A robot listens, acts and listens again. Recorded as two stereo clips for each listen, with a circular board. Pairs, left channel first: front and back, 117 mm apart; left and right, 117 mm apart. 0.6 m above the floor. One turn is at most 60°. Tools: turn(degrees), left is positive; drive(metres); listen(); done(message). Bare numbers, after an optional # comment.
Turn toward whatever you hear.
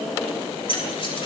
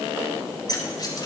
# The keys jangling: 40° left.
turn(40)
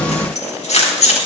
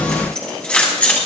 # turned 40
# The keys jangling is now 15° left.
turn(15)
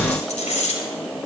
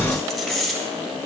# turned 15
done("Facing the keys jangling.")